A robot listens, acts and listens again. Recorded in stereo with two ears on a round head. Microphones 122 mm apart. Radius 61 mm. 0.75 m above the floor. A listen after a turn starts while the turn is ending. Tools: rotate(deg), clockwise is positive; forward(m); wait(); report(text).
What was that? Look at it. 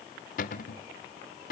rotate(-65)
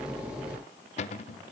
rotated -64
rotate(-50)
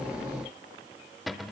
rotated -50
report("Found it: a cupboard door, straight ahead, under 1 m away.")